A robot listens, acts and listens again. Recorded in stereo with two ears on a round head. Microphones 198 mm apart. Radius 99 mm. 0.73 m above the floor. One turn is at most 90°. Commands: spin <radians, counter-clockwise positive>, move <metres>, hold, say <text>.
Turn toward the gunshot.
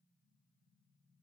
hold
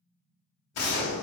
spin 1.57
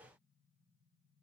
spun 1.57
say I heard a gunshot from this way, but can't make it out now.